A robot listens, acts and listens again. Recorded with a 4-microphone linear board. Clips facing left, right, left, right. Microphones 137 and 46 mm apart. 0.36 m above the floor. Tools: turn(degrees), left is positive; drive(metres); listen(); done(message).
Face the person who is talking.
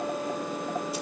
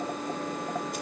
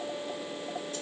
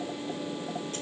listen()
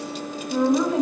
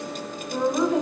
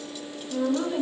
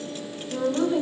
turn(degrees=15)
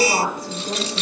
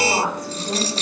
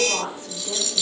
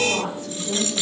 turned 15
turn(degrees=150)
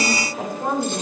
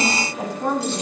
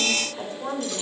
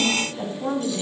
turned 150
turn(degrees=30)
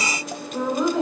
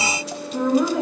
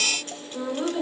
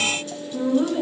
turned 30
turn(degrees=-10)
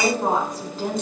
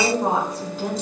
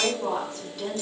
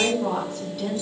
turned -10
done("Facing the woman speaking, over 4 m away.")